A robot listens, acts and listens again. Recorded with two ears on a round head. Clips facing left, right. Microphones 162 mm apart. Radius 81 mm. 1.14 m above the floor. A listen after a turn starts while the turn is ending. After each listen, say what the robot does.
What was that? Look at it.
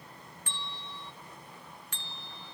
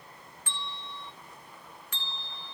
Turn 75° right.
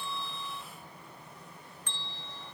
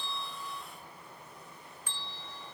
Turn 10° right.
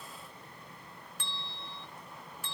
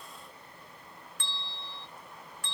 Found it: a bell, straight ahead.